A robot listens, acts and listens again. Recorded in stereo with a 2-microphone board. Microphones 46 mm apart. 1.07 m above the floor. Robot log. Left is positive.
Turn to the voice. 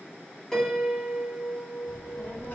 note: The child speaking: about 50° left or 130° left.
cmd yaw +50
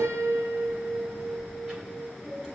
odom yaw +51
note: So it is at 15° right.
cmd yaw -15
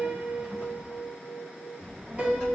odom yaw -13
end: Facing the child speaking.